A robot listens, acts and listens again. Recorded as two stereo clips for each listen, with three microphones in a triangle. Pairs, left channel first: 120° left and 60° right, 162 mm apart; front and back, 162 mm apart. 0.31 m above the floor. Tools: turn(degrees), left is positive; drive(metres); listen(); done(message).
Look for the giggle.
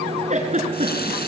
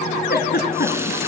turn(degrees=-15)
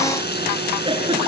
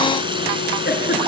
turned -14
done("Found it: a giggle, straight ahead.")